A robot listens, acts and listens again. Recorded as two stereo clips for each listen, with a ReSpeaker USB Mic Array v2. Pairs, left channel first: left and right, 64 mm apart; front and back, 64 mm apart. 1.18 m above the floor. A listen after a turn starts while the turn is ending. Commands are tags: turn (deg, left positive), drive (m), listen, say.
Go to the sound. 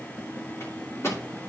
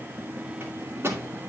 <turn deg="130"/>
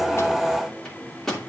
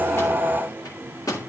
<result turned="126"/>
<drive m="1.0"/>
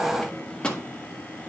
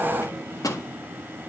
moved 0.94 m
<turn deg="15"/>
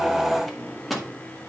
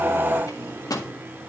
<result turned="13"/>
<drive m="1.0"/>
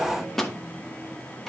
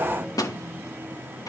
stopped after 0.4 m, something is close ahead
<say>Arrived at the microwave, straight ahead.</say>